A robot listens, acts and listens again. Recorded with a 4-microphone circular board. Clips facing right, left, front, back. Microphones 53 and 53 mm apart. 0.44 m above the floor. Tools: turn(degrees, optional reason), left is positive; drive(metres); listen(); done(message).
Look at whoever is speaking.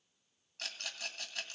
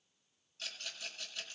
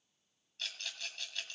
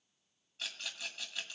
listen()
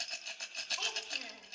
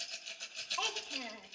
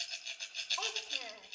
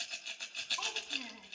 turn(degrees=20, reason="The child speaking: 20° left.")
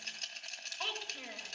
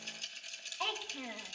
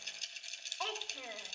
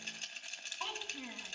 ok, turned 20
done("Found it: a child speaking, straight ahead, 1 to 2 m away.")